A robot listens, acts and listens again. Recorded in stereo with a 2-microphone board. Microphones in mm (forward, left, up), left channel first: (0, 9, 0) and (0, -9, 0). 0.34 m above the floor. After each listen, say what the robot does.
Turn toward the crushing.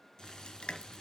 Turn 90° left.
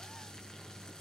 Keep listening.
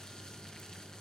Keep listening.
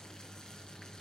Facing where the crushing came from. I can't hear it now.